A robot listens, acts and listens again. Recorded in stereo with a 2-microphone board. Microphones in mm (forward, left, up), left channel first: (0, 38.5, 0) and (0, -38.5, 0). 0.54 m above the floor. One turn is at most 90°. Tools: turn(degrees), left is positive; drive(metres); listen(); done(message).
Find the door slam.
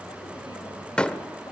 turn(degrees=30)
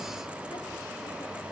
listen()
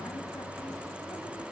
done("I heard a door slam, but can't make it out now. It was about 20° right or 140° left.")